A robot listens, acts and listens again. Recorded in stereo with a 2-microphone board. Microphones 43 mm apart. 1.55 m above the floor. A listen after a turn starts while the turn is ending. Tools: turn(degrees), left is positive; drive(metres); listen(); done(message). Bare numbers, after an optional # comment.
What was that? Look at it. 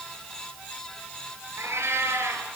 # The cat meowing: about 75° right or 105° right.
turn(-75)
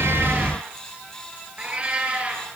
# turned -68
# So it is at 30° right.
turn(-30)
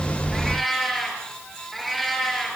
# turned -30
done("Facing the cat meowing.")